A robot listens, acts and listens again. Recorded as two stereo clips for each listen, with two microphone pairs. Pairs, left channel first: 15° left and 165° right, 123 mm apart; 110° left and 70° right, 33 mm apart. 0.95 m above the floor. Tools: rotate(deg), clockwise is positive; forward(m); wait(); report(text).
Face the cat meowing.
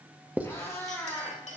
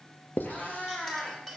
rotate(-80)
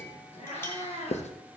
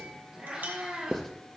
rotate(15)
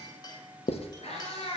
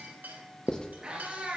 rotate(20)
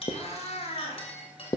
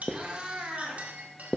rotate(15)
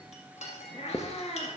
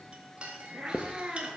report("Facing the cat meowing, 1 to 2 m away.")